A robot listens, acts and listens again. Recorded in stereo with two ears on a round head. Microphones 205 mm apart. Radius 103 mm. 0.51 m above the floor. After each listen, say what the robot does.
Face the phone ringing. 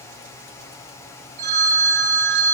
Turn 45° right.
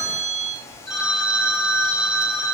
Facing the phone ringing, 2 to 4 m away.